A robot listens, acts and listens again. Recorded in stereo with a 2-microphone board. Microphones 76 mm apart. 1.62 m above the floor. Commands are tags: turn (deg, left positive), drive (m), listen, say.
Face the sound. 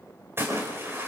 <turn deg="-30"/>
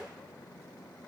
<listen/>
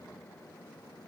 <say>I heard a splash, but can't make it out now. It was about straight ahead or 120° right.</say>